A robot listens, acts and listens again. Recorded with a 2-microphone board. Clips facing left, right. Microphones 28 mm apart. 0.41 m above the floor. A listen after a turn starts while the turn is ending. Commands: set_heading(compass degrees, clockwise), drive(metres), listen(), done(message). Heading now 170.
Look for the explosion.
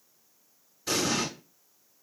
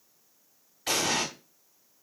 set_heading(230)
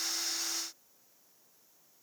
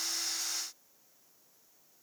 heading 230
listen()
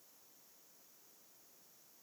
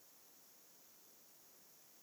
done("I heard an explosion, but can't make it out now. It was about straight ahead or 60° right.")